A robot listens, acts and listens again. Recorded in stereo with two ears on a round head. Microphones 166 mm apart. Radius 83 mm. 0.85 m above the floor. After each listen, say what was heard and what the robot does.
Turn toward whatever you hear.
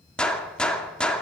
Turn 30° left.
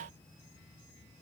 Keep listening.
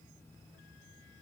I heard a gunshot, but can't make it out now. It was about 25° right or 145° left.